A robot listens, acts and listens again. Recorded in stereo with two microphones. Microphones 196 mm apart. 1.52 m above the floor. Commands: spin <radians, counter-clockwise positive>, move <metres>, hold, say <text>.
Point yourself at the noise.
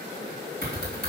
spin 1.13
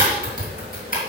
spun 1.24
spin 0.79
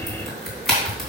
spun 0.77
say Found it: typing on a keyboard, straight ahead, 2 to 4 m away.